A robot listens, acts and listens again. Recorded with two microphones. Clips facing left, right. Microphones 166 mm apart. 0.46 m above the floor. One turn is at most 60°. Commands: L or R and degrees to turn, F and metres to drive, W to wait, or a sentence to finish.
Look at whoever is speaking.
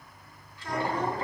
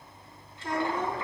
R25
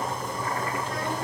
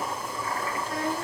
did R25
W
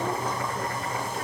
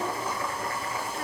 W
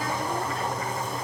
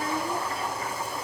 I heard a child speaking, but can't make it out now. It was about straight ahead or 130° right.